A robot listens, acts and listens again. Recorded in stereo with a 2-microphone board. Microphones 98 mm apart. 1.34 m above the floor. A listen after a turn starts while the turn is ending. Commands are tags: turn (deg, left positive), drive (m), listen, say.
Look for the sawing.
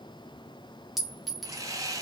<turn deg="-35"/>
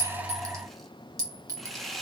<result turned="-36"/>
<say>Found it: sawing, straight ahead.</say>